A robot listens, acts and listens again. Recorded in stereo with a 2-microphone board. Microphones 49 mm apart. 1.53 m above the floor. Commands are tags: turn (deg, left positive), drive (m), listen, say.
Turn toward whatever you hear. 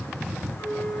<turn deg="70"/>
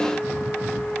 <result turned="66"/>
<turn deg="35"/>
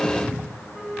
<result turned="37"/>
<say>Facing the flute, 2 to 4 m away.</say>